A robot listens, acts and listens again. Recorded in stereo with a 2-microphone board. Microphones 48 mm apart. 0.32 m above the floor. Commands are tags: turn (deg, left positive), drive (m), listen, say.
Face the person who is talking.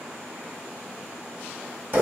<listen/>
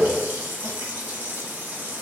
<listen/>
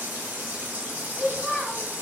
<turn deg="25"/>
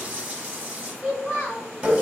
<turn deg="125"/>
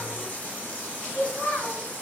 <turn deg="-50"/>
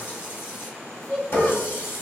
<turn deg="20"/>
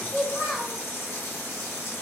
<say>Facing the child speaking.</say>